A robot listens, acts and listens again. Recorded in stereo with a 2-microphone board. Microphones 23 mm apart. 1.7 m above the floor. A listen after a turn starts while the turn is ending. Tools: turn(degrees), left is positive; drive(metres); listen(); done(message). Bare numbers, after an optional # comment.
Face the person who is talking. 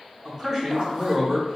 # The man speaking: about 15° right or 165° right.
turn(-15)
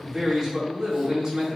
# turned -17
# So it is at 145° right.
turn(-145)
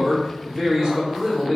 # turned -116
# The man speaking is now 30° right.
turn(-30)
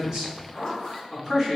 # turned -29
done("Facing the man speaking, 1 to 2 m away.")